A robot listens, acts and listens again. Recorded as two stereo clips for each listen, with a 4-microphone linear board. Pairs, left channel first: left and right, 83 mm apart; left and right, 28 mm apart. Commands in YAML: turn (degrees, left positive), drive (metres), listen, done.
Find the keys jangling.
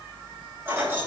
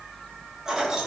turn: -20
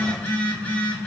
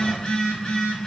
listen: true
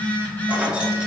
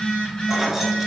turn: -30
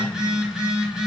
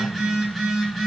listen: true
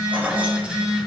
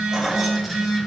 turn: -30
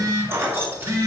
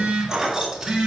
turn: -25
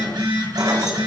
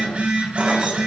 listen: true
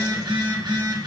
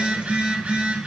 listen: true
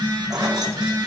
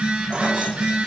done: "I heard keys jangling, but can't make it out now. It was about straight ahead or 130° right."